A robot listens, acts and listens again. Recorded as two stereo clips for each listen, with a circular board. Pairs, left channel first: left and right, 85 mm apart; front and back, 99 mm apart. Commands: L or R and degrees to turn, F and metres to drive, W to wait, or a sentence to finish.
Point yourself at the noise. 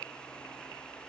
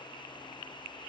W
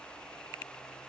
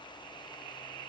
W
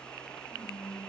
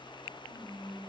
Facing the whispering, 2 to 4 m away.